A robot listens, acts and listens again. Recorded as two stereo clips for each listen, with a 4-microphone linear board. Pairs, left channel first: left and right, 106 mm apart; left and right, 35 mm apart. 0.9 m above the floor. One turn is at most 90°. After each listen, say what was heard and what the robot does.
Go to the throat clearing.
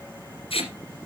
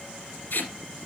Keep listening.
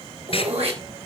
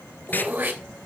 Turn 90° right.
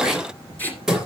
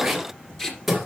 Drive 1.0 m forward.
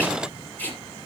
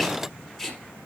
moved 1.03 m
Keep listening.
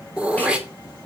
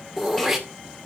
The throat clearing is now 10° right. Turn 10° right.
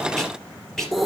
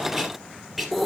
Drive 1.0 m forward.
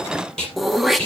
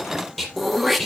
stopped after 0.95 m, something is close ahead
I am next to the throat clearing.